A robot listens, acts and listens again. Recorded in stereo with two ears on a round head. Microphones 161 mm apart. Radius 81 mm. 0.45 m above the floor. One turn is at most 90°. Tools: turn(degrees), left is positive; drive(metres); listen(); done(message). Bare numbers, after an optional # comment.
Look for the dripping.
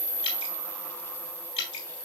# The dripping: about 30° left or 150° left.
turn(30)
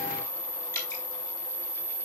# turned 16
# So it is at 15° left.
turn(15)
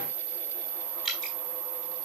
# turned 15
done("Facing the dripping, 2 to 4 m away.")